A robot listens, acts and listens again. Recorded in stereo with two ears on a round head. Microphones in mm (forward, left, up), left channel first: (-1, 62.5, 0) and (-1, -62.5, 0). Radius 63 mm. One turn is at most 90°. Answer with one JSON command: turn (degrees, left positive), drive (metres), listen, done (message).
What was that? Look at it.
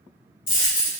{"turn": 35}
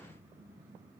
{"listen": true}
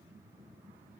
{"done": "I heard a dropped coin, but can't make it out now. It was about straight ahead or 110° left."}